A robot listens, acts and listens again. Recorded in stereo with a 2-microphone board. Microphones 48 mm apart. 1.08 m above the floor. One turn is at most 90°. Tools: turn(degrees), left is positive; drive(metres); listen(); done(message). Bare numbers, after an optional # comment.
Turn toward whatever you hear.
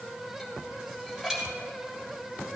turn(-30)
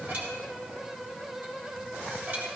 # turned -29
# So it is at 140° right.
turn(-90)
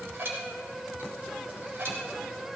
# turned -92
# The dishes clattering is now 50° right.
turn(-50)
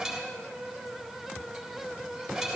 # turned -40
# The dishes clattering is now 10° right.
turn(-10)
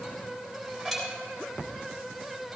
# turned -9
done("Found it: dishes clattering, straight ahead, 2 to 4 m away.")